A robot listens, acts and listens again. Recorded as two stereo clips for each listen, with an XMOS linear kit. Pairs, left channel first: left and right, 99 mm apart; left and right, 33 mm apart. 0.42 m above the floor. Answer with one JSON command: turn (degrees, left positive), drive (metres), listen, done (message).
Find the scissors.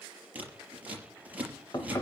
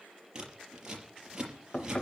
{"turn": -15}
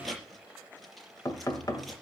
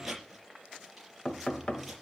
{"done": "Facing the scissors."}